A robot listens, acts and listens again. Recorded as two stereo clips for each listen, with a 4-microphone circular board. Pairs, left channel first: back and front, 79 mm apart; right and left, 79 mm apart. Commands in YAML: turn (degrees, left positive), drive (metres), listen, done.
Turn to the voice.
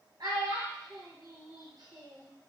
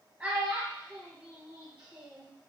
turn: 25
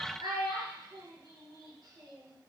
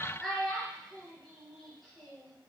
done: "Facing the child speaking, 1 to 2 m away."